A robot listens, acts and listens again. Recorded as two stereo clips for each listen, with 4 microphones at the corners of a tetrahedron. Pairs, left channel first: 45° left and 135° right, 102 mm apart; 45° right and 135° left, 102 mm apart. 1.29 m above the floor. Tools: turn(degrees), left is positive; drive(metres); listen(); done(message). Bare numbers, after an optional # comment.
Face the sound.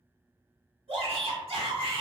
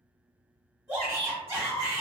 # The shout: 155° right.
turn(-155)
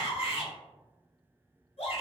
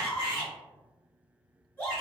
# The shout is now 25° left.
turn(25)
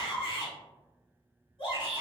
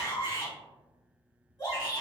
done("Facing the shout, 1 to 2 m away.")